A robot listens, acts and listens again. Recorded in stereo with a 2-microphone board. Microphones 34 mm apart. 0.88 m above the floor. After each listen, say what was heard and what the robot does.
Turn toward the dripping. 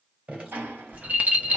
The dripping: about 45° right or 135° right. Turn 45° right.
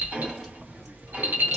Keep listening.
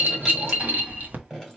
Facing the dripping, 2 to 4 m away.